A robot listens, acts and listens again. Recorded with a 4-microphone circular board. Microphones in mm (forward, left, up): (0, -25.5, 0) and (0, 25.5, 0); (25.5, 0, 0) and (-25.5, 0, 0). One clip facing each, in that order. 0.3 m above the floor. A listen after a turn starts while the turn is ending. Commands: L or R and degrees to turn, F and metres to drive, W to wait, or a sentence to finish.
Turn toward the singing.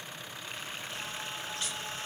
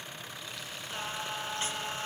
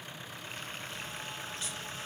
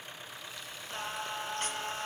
L145
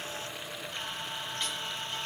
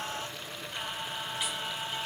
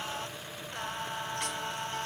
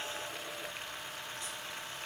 L10
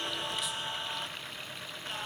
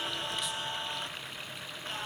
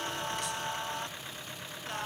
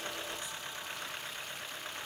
Facing the singing, 1 to 2 m away.